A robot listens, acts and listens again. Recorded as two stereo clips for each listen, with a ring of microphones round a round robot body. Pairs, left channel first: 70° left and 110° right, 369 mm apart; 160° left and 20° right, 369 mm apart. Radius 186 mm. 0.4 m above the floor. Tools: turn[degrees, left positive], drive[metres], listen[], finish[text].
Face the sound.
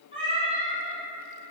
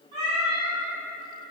Thought: The cat meowing: 40° right.
Action: turn[-40]
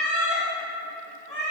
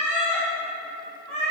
Thought: The cat meowing is now 10° right.
Action: turn[-10]
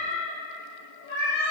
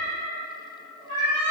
Action: finish[Facing the cat meowing.]